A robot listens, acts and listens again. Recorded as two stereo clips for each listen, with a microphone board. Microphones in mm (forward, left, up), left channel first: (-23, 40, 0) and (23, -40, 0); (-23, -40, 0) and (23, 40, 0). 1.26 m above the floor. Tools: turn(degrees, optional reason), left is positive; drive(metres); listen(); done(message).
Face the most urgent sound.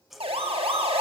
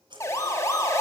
turn(degrees=-65, reason="The siren: 65° right.")
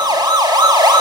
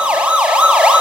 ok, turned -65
turn(degrees=-20, reason="The siren is now 20° right.")
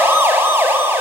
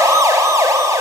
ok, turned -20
done("Facing the siren.")